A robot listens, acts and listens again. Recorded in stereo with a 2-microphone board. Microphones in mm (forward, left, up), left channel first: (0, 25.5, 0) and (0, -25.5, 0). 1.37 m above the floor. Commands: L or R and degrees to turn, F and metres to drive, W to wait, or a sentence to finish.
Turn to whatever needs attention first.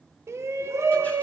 R65
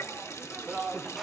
Found it: a shout, straight ahead.